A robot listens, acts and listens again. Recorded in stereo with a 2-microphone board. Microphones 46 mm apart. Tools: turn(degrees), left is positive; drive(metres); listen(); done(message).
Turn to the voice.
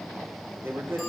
turn(degrees=-55)
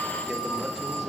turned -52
listen()
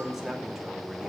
done("Found it: a man speaking, straight ahead, 2 to 4 m away.")